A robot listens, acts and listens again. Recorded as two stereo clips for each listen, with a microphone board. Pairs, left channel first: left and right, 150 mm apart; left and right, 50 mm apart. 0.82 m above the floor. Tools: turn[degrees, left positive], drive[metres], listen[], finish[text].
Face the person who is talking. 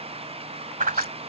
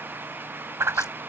Action: listen[]
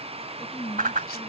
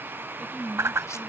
Action: turn[30]
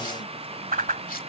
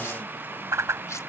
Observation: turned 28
Action: listen[]
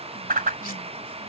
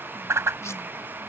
Action: listen[]
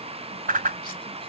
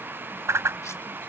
Action: finish[I heard a woman speaking, but can't make it out now. It was about 20° right or 145° left.]